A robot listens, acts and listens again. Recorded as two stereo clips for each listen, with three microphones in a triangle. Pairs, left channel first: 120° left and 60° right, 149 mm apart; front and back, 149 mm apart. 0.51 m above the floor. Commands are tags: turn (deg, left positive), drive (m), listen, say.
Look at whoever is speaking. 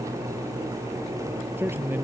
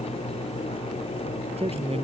<turn deg="-135"/>
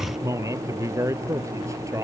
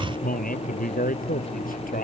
<turn deg="10"/>
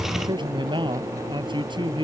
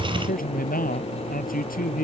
<say>Facing the man speaking.</say>